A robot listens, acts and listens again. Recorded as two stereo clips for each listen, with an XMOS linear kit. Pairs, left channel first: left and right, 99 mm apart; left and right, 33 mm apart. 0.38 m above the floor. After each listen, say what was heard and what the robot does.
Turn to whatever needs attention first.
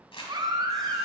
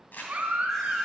The baby crying: about 45° right or 135° right. Turn 45° right.
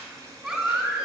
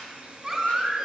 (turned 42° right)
Found it: a baby crying, straight ahead, 1 to 2 m away.